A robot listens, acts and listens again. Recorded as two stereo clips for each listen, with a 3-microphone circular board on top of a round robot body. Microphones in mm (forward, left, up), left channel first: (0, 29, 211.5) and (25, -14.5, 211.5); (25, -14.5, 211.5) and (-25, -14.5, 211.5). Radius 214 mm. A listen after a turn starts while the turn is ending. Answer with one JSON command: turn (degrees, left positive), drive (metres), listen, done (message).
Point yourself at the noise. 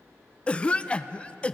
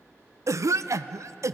{"turn": -170}
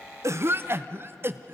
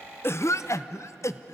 {"turn": -20}
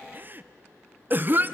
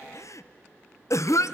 {"turn": -10}
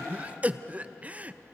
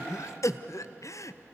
{"done": "Found it: a cough, straight ahead."}